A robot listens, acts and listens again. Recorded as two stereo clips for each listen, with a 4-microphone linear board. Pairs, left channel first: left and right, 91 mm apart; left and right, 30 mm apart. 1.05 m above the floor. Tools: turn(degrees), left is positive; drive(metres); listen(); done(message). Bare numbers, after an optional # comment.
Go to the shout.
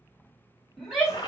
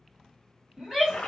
turn(-30)
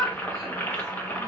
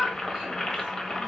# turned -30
# So it is at 145° right.
turn(-145)
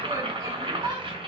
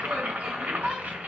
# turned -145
# The shout is now 35° right.
turn(-35)
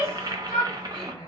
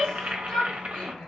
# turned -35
# The shout is now 10° left.
turn(10)
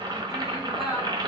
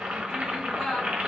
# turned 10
drive(1.0)
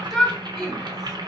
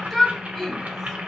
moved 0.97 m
drive(1.0)
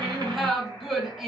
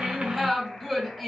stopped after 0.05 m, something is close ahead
done("I am next to the shout.")